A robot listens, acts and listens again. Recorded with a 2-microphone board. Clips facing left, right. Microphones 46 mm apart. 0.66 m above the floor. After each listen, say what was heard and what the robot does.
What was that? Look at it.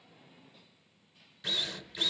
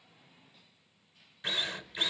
The drill: about 25° right or 155° right. Turn 25° right.
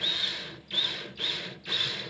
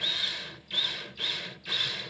Found it: a drill, straight ahead.